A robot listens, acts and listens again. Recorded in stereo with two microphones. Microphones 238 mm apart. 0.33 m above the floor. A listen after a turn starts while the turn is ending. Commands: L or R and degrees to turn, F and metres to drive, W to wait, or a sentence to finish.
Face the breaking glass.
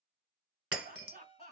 R70
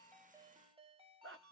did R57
W
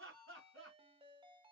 I heard breaking glass, but can't make it out now. It was about 10° right or 55° right.